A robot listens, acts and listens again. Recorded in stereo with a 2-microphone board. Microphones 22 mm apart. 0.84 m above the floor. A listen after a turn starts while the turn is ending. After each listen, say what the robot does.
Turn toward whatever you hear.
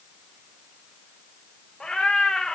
Turn 50° left.
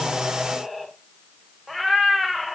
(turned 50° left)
Found it: a cat meowing, straight ahead.